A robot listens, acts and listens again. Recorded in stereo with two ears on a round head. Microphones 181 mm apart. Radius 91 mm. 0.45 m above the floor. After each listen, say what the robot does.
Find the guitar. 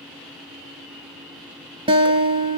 Turn 25° right.
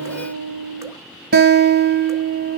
Turn 130° right.
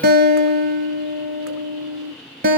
Turn 45° right.
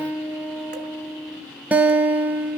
Facing the guitar.